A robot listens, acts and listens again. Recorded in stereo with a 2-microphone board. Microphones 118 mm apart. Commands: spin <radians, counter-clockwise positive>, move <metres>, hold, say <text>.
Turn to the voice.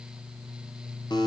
hold
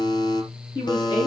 spin 0.70
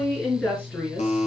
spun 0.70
spin 0.17
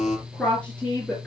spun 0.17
spin 0.26
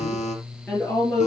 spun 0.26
say Found it: a woman speaking, straight ahead.